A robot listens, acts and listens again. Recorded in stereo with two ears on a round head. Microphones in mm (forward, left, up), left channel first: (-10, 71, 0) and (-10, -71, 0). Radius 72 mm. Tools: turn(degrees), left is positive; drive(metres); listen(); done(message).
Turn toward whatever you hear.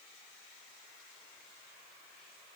listen()
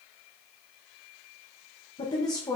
turn(degrees=20)
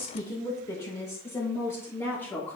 turn(degrees=30)
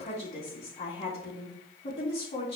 turn(degrees=140)
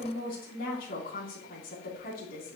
turn(degrees=55)
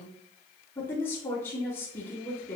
turn(degrees=15)
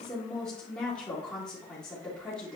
done("Found it: a woman speaking, straight ahead, 2 to 4 m away.")